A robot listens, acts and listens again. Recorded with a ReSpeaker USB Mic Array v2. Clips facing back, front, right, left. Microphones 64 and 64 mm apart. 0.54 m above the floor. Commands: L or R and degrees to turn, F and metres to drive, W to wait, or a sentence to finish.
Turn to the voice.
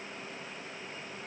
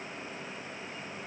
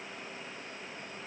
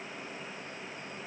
W
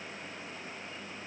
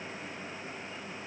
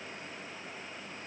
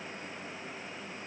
W
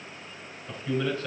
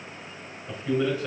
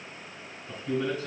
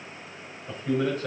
L80
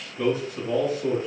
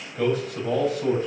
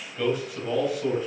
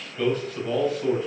Facing the man speaking, 2 to 4 m away.